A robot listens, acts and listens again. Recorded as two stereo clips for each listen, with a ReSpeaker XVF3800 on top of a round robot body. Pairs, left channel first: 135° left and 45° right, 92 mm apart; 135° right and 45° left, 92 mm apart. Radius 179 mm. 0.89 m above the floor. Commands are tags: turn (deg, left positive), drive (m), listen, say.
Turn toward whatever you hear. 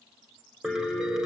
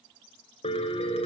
<turn deg="-130"/>
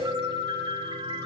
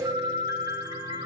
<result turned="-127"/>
<say>Found it: a piano, straight ahead.</say>